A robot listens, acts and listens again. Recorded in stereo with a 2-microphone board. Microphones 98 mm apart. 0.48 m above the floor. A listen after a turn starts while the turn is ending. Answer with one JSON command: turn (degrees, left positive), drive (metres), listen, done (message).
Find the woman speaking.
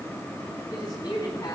{"turn": 50}
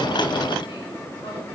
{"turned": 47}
{"listen": true}
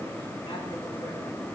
{"listen": true}
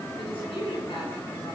{"turn": 80}
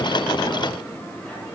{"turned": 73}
{"listen": true}
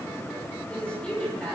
{"turn": 10}
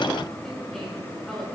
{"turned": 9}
{"done": "Found it: a woman speaking, straight ahead, over 4 m away."}